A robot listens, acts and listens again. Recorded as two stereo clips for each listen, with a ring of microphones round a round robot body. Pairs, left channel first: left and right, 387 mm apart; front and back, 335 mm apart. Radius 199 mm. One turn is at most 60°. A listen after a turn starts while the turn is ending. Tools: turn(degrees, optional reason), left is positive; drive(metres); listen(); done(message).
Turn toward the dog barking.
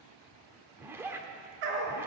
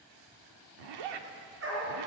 turn(degrees=-60, reason="The dog barking: 115° right.")
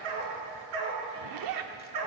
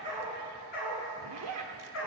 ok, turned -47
turn(degrees=-60, reason="The dog barking is now 60° right.")
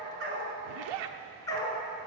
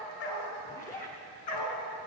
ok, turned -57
turn(degrees=10, reason="The dog barking is now 10° left.")
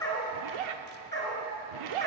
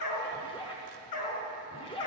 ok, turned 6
turn(degrees=10, reason="The dog barking is now 10° left.")
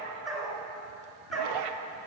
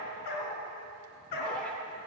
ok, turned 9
done("Facing the dog barking.")